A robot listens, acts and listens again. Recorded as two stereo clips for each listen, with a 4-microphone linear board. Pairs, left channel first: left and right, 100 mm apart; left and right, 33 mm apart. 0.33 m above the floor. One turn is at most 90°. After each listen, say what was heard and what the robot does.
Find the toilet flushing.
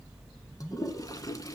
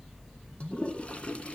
The toilet flushing: about 35° left or 145° left. Turn 35° left.
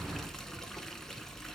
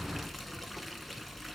Found it: a toilet flushing, straight ahead.